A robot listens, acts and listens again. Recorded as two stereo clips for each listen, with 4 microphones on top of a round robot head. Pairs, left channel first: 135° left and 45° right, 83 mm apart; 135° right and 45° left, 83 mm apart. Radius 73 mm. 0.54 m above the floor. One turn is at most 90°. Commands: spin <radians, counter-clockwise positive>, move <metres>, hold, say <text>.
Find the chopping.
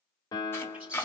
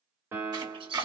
spin 1.31
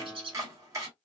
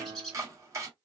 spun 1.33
say Facing the chopping, 2 to 4 m away.